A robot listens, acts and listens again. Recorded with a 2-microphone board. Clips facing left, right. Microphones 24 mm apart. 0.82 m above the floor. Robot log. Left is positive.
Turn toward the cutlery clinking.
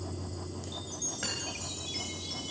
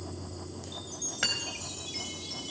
note: The cutlery clinking: about 50° right or 130° right.
cmd yaw -50
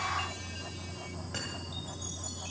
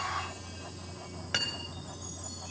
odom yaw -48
note: So it is at 80° right.
cmd yaw -80
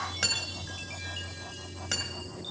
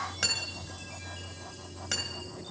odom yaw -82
end: Facing the cutlery clinking, 2 to 4 m away.